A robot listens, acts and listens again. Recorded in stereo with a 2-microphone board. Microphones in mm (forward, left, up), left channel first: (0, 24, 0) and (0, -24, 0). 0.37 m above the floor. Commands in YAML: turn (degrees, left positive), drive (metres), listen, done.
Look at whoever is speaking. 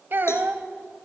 turn: -55
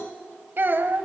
turn: -60
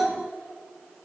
turn: -10
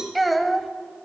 done: "Facing the child speaking."